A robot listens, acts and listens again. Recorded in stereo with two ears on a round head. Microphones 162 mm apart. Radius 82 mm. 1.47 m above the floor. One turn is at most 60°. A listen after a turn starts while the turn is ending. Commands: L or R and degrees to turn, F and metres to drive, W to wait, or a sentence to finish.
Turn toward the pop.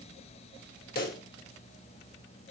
L55
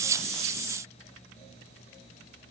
W
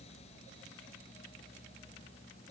I heard a pop, but can't make it out now. It was about straight ahead or 70° left.